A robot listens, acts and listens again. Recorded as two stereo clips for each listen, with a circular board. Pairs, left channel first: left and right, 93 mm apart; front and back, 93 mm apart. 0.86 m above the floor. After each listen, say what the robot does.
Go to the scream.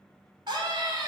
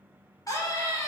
Turn 50° right.
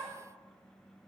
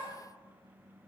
Drive 1.0 m forward.
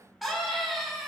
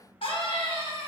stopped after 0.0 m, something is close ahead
Something is in my way. I am facing the scream but have not reached it.